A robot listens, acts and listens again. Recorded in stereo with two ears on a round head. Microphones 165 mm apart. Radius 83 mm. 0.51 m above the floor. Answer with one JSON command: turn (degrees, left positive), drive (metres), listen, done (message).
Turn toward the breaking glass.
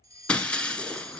{"turn": 30}
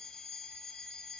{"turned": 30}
{"listen": true}
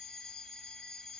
{"done": "I heard breaking glass, but can't make it out now. It was about 25° right or 145° left."}